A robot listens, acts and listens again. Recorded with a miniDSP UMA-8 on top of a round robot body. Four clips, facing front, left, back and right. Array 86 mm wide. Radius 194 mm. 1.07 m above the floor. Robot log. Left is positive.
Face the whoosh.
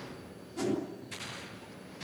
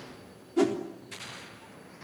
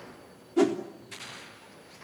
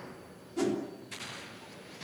note: The whoosh: 150° left.
cmd yaw +150
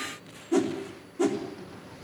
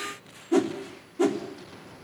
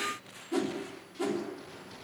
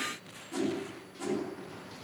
note: The whoosh is now 70° left.
cmd yaw +70
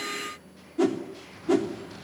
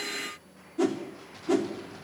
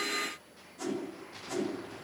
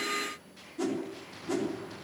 note: The whoosh is now 30° left.
cmd yaw +30
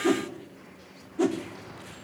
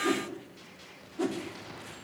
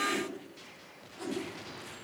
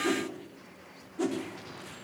end: Found it: a whoosh, straight ahead, 2 to 4 m away.